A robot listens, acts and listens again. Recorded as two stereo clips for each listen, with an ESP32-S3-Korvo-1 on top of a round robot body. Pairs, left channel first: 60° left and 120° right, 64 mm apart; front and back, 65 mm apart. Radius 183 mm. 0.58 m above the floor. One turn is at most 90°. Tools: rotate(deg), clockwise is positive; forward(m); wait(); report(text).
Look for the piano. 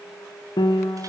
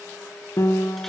rotate(-50)
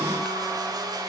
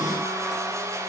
wait()
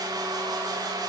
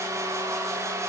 wait()
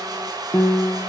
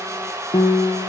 report("Facing the piano, 1 to 2 m away.")